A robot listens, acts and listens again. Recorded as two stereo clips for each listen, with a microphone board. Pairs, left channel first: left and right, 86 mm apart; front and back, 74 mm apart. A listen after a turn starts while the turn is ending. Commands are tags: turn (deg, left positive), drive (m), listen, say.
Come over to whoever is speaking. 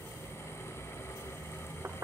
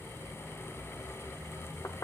<listen/>
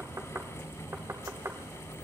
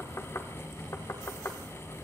<listen/>
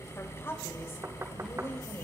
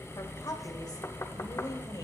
<turn deg="30"/>
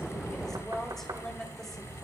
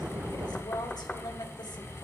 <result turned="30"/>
<drive m="1.0"/>
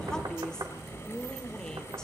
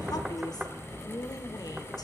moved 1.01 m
<turn deg="10"/>
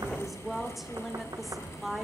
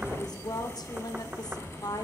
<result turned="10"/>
<drive m="1.0"/>
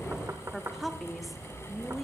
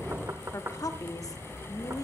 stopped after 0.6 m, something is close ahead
<say>Arrived at the woman speaking, straight ahead.</say>